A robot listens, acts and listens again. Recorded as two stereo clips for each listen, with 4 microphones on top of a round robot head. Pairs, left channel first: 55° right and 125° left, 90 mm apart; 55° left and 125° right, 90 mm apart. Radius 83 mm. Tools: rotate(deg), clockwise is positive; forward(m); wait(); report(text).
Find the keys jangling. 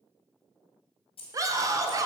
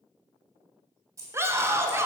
rotate(75)
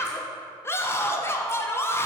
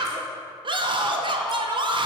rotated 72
wait()
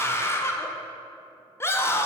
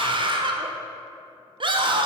wait()
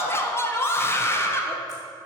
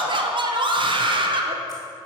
report("Facing where the keys jangling came from. I can't hear it now.")